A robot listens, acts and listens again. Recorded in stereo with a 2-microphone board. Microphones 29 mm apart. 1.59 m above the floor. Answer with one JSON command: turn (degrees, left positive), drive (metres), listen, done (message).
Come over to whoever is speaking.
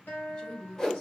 {"turn": 45}
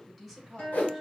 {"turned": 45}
{"drive": 1.0}
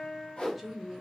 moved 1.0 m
{"drive": 1.0}
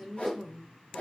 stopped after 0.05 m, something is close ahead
{"done": "Arrived at the woman speaking, straight ahead."}